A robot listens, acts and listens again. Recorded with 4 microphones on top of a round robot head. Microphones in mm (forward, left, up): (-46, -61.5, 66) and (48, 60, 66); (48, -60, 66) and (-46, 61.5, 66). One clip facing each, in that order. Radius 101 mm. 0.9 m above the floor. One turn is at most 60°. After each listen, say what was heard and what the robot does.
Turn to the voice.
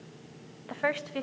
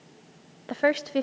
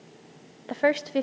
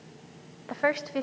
Found it: a woman speaking, straight ahead.